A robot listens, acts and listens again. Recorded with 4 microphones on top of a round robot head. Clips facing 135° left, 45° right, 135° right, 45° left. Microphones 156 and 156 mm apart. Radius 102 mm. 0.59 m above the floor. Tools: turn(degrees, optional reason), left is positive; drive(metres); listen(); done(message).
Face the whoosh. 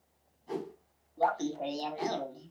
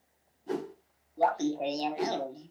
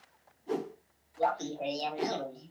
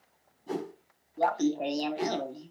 turn(degrees=-10, reason="The whoosh: 10° right.")
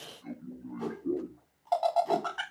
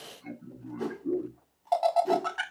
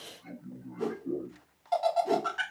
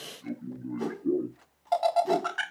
done("Facing the whoosh, 2 to 4 m away.")